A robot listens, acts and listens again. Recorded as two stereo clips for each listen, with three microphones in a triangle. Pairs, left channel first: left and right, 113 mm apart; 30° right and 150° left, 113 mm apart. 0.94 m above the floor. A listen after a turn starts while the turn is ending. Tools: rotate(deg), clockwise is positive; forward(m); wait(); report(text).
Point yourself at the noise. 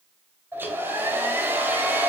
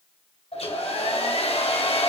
rotate(20)
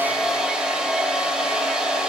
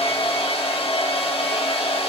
rotate(10)
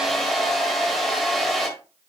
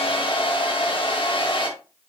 report("Facing the hair dryer, 1 to 2 m away.")